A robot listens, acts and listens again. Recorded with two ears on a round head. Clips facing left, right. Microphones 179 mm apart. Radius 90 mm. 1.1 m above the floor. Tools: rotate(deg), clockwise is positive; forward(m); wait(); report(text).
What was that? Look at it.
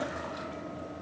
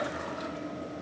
wait()
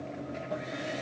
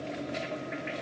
wait()
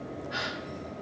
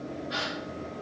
rotate(50)
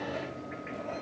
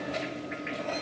wait()
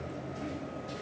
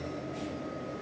report("I heard a gasp, but can't make it out now. It was about straight ahead or 80° right.")